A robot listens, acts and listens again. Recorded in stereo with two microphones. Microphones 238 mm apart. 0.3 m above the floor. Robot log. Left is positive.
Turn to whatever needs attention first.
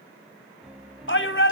note: The shout: about 55° left or 125° left.
cmd yaw +55
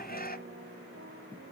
note: So it is at 50° left.
cmd yaw +50
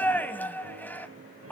note: The shout is now 10° left.
cmd yaw +10
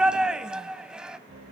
end: Facing the shout.